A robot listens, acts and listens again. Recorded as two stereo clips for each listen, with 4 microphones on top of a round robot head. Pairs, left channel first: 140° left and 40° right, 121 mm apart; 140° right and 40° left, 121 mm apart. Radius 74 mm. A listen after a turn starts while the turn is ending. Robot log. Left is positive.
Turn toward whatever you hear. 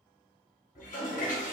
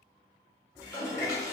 note: The toilet flushing: 160° left.
cmd yaw +160
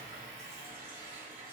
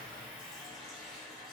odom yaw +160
note: The toilet flushing is now 45° right.
cmd yaw -45
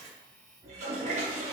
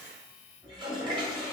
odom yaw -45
note: The toilet flushing is now 10° right.
cmd yaw -10
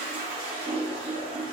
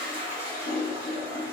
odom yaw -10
end: Found it: a toilet flushing, straight ahead, 1 to 2 m away.